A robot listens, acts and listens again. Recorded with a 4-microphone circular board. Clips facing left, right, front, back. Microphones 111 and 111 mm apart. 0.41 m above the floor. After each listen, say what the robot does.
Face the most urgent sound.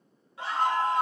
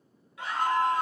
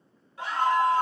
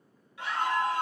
Turn 40° left.
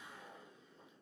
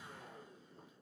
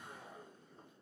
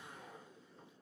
Keep listening.
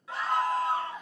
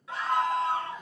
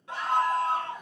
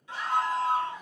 Found it: a scream, straight ahead, 2 to 4 m away.